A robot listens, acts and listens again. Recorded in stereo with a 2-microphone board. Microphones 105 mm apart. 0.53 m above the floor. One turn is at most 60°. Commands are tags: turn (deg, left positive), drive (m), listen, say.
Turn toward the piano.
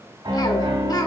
<turn deg="-45"/>
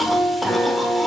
<say>Facing the piano, 2 to 4 m away.</say>